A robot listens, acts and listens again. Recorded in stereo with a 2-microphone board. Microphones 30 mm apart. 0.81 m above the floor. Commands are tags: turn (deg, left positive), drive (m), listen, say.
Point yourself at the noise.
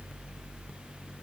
<listen/>
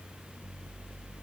<listen/>
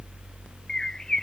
<turn deg="15"/>
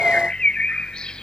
<turn deg="150"/>
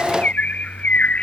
<turn deg="55"/>
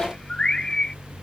<turn deg="20"/>
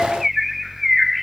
<say>Found it: a bird, straight ahead.</say>